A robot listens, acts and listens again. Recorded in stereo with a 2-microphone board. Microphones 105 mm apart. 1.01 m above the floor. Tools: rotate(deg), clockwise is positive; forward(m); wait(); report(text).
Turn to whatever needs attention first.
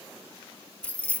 wait()
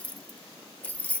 wait()
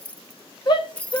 rotate(-45)
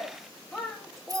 report("Facing the shout.")